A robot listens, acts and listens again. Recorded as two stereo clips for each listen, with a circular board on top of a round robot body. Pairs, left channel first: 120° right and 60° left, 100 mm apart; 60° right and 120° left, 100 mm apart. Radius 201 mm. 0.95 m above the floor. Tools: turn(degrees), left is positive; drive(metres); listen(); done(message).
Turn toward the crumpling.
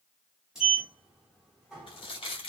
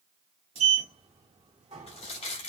turn(degrees=-80)
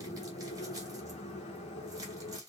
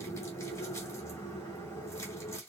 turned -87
listen()
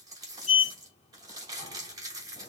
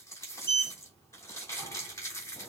done("Facing the crumpling.")